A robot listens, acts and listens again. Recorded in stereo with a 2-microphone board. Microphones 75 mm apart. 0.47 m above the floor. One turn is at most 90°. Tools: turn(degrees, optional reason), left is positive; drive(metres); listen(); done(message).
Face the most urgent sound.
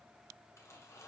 listen()
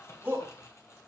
turn(degrees=-25, reason="The shout: about 25° right or 155° right.")
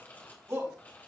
turn(degrees=-90, reason="So it is at 130° right.")
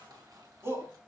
turn(degrees=-40, reason="The shout is now 40° right.")
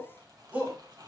turn(degrees=-25, reason="The shout is now 25° right.")
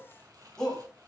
turn(degrees=10, reason="The shout is now 10° left.")
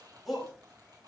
done("Found it: a shout, straight ahead, 2 to 4 m away.")